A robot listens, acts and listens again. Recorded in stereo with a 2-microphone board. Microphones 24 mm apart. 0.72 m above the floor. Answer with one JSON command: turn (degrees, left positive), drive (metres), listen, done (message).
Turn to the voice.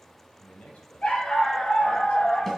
{"turn": 90}
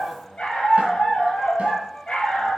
{"listen": true}
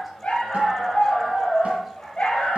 {"listen": true}
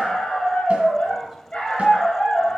{"done": "I heard a man speaking from this way, but can't make it out now."}